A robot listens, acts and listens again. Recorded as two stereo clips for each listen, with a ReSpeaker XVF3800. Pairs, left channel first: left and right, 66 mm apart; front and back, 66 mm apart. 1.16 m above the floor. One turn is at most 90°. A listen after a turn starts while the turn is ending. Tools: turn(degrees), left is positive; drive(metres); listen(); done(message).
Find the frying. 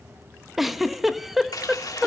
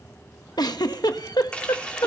turn(degrees=70)
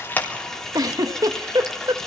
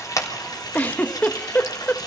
turn(degrees=10)
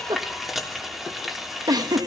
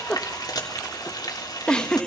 done("Facing the frying.")